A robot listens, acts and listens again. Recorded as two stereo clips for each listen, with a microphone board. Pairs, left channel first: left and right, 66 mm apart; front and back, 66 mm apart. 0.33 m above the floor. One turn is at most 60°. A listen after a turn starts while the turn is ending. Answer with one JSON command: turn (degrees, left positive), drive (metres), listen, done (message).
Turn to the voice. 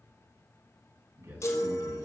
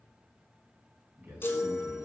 {"turn": -60}
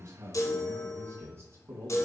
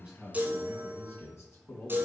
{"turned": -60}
{"turn": -45}
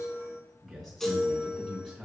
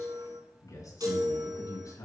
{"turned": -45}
{"done": "Found it: a man speaking, straight ahead, 2 to 4 m away."}